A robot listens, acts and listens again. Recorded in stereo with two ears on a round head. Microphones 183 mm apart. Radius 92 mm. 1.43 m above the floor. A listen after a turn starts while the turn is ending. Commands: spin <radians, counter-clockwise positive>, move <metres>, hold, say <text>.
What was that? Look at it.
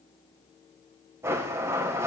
spin -0.52
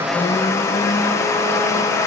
spin 0.26
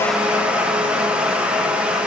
say Facing the blender, 1 to 2 m away.